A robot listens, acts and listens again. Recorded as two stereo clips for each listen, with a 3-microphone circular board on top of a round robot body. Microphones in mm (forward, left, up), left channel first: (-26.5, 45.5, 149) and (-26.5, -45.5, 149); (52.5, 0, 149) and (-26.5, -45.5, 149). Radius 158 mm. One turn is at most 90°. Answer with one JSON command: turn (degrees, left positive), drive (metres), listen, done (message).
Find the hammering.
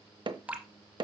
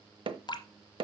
{"turn": -90}
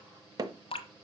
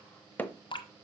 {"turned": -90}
{"turn": -45}
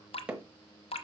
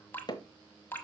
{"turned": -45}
{"turn": -10}
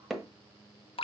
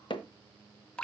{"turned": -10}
{"done": "Found it: hammering, straight ahead, 1 to 2 m away."}